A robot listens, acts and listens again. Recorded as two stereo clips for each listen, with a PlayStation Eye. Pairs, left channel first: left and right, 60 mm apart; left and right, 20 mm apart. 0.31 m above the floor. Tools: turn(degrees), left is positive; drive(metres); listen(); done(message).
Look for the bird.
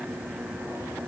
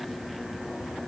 listen()
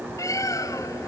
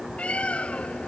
turn(degrees=70)
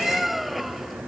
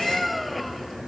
done("Found it: a bird, straight ahead.")